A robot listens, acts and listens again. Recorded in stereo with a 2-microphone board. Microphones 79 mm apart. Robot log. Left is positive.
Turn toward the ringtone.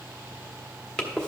cmd idle
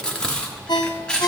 note: The ringtone: about 60° left or 120° left.
cmd yaw +60
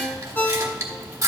note: So it is at 20° left.
cmd yaw +20
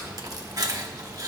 cmd idle
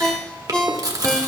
note: The ringtone is now 10° left.
cmd yaw +10
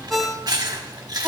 end: Facing the ringtone.